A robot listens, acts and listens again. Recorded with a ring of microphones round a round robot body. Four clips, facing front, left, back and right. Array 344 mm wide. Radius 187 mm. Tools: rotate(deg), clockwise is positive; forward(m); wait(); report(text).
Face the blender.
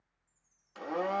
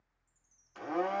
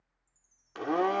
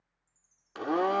rotate(130)
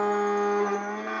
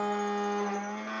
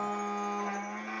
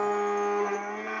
rotate(30)
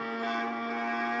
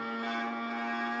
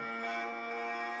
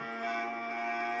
rotate(-10)
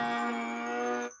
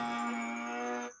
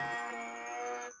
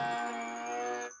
report("Facing the blender, under 1 m away.")